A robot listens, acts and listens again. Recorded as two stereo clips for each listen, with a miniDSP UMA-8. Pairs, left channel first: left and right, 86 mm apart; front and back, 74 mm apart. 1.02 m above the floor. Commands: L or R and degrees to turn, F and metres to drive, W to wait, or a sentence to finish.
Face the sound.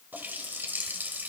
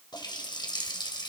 R20
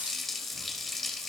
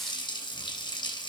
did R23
Found it: a running tap, straight ahead.